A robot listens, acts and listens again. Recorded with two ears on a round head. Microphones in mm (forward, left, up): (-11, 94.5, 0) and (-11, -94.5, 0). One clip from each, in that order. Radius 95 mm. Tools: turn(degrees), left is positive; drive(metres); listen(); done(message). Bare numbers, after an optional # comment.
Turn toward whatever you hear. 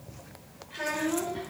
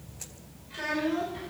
turn(-30)
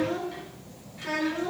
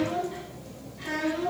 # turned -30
# So it is at 25° left.
turn(25)
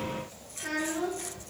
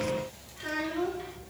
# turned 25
done("Found it: a child speaking, straight ahead.")